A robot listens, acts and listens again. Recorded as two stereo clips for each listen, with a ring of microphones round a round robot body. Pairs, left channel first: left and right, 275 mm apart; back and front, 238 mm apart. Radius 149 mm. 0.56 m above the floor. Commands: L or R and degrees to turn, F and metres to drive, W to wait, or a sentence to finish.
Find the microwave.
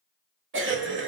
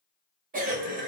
W
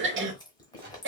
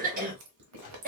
R140
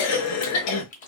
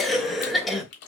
W
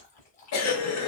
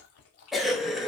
W
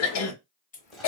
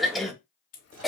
I heard a microwave from this way, but can't make it out now.